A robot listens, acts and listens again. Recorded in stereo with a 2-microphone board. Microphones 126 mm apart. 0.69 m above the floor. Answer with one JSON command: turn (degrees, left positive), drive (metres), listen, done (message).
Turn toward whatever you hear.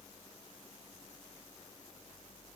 {"listen": true}
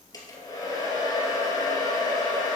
{"turn": 30}
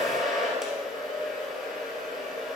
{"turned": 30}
{"done": "Found it: a hair dryer, straight ahead, 2 to 4 m away."}